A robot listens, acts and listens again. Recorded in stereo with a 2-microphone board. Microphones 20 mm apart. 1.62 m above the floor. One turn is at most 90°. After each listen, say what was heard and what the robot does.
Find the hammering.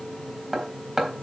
Turn 30° right.
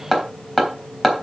So it is at 25° left. Turn 25° left.
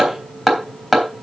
The hammering is now 10° left. Turn 10° left.
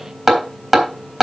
Found it: hammering, straight ahead, 2 to 4 m away.